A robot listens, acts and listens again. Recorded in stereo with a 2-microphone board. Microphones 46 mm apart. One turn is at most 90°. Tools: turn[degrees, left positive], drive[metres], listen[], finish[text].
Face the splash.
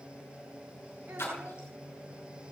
Thought: The splash: about 60° left or 120° left.
Action: turn[60]
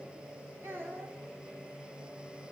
Action: listen[]
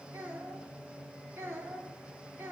Action: finish[I heard a splash, but can't make it out now. It was about straight ahead or 60° left.]